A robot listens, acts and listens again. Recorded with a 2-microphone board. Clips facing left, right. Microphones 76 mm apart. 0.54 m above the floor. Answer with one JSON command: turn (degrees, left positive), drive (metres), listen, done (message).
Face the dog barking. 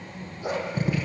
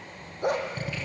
{"turn": -55}
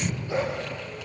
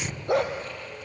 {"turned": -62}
{"turn": -65}
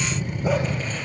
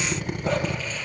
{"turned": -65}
{"listen": true}
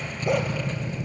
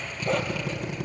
{"listen": true}
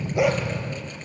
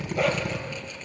{"turn": 10}
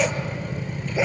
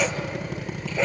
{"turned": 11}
{"done": "Found it: a dog barking, straight ahead, 2 to 4 m away."}